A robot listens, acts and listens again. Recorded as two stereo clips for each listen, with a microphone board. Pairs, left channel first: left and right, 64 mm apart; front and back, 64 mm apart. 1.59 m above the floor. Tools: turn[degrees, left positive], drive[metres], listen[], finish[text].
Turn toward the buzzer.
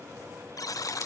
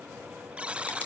Thought: The buzzer: 110° left.
Action: turn[110]
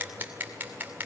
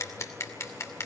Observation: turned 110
Action: listen[]
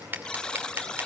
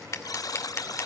Thought: The buzzer is now 15° left.
Action: turn[15]
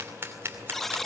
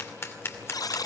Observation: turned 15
Action: finish[Found it: a buzzer, straight ahead, under 1 m away.]